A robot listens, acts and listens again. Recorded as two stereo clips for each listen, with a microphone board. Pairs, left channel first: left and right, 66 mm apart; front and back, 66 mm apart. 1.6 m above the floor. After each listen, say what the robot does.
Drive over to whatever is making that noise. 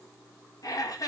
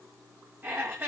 Turn 120° left.
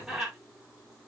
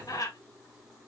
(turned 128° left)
Drive 1.0 m forward.
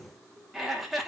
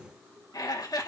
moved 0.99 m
Drive 1.0 m forward.
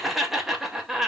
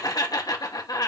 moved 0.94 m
Drive 1.0 m forward.
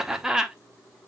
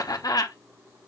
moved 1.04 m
Turn 10° right.
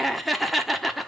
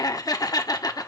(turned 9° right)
Drive 1.0 m forward.
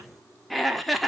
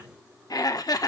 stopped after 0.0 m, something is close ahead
I am next to the laughter.